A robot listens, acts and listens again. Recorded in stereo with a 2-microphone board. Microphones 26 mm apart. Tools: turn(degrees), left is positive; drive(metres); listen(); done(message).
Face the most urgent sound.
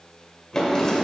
listen()
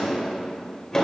listen()
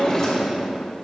done("I can't make out anything urgent to turn to.")